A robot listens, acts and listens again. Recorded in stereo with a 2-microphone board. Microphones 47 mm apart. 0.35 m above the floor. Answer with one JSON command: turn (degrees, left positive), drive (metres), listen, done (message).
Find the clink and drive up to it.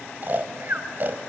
{"listen": true}
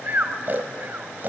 {"listen": true}
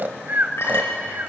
{"turn": 60}
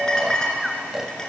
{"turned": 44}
{"turn": 15}
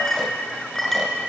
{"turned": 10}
{"drive": 1.0}
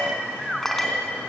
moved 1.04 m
{"drive": 1.0}
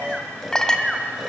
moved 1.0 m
{"turn": 15}
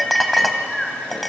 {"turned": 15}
{"drive": 1.0}
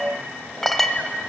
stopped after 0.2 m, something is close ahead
{"done": "Arrived at the clink, straight ahead."}